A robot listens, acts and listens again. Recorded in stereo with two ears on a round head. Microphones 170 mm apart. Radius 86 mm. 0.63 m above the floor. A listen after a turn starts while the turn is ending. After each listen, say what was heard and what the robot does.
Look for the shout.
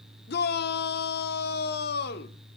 The shout: about 55° left or 125° left. Turn 55° left.
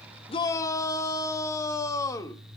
So it is at 20° left. Turn 20° left.
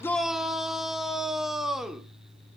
Found it: a shout, straight ahead.